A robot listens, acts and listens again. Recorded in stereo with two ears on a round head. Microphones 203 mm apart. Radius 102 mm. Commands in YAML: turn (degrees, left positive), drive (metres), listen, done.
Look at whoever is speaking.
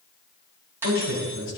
turn: 55
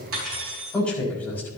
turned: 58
turn: 10
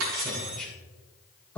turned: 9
done: "Facing the man speaking."